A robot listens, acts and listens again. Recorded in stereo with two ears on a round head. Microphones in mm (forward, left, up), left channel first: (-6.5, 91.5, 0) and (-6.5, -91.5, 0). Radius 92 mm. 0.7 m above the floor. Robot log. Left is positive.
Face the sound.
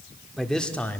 cmd yaw +30
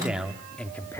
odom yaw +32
cmd yaw +30
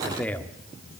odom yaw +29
cmd yaw +30
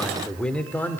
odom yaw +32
cmd yaw +30
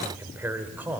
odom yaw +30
note: So it is at 10° right.
cmd yaw -10
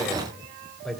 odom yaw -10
end: Facing the man speaking, 2 to 4 m away.